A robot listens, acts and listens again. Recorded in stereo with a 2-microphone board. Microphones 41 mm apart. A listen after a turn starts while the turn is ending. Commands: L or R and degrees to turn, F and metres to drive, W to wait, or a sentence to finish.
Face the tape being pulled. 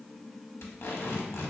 L90
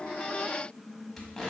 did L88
Found it: tape being pulled, straight ahead, under 1 m away.